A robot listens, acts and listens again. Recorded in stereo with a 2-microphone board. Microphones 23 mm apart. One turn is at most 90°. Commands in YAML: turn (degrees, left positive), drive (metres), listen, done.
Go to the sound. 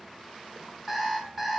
turn: 30
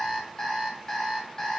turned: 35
turn: 90
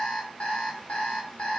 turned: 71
turn: 60
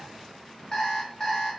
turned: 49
turn: 10
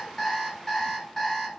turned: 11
drive: 1.0
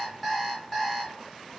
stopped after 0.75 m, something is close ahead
done: "I am next to the alarm clock."